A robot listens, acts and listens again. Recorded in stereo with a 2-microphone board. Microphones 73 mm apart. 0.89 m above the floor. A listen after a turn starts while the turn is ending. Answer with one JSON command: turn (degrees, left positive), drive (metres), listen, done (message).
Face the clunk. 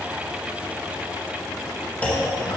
{"turn": 20}
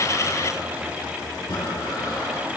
{"listen": true}
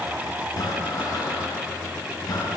{"done": "I heard a clunk, but can't make it out now. It was about straight ahead or 140° left."}